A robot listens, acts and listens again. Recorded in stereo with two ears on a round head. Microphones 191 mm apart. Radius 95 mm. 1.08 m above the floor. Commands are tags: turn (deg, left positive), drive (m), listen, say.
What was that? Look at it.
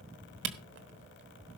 <turn deg="-55"/>
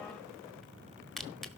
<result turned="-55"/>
<say>Found it: a camera shutter, straight ahead, 1 to 2 m away.</say>